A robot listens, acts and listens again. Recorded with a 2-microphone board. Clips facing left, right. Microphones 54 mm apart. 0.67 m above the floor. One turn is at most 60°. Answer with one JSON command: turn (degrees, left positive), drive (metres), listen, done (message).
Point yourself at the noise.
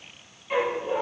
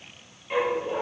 {"turn": 30}
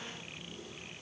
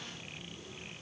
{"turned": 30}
{"listen": true}
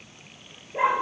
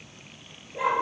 {"turn": 60}
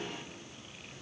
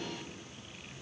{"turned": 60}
{"turn": 50}
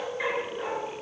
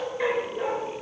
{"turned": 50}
{"done": "Found it: a dog barking, straight ahead, 2 to 4 m away."}